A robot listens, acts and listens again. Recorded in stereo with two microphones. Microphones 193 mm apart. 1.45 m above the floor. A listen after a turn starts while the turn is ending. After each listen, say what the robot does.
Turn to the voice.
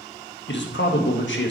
Turn 90° left.
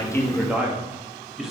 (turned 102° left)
Facing the man speaking.